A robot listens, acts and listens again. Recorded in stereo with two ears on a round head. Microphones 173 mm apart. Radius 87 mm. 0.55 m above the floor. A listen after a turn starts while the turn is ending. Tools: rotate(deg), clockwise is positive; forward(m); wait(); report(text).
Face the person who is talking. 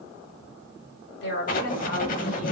rotate(-60)
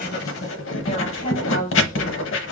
rotate(-40)
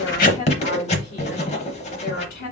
rotate(-55)
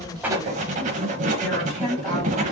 report("Found it: a woman speaking, straight ahead, 1 to 2 m away.")